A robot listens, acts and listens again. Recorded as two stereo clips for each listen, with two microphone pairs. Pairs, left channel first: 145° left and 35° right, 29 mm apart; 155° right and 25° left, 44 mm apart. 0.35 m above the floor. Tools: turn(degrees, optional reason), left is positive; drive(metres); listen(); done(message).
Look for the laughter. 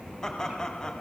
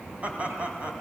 turn(degrees=85, reason="The laughter: 85° left.")
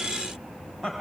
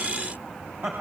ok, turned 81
turn(degrees=35, reason="The laughter is now 35° left.")
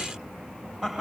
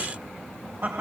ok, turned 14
turn(degrees=40, reason="The laughter is now 40° left.")
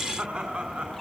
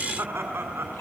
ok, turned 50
done("Facing the laughter.")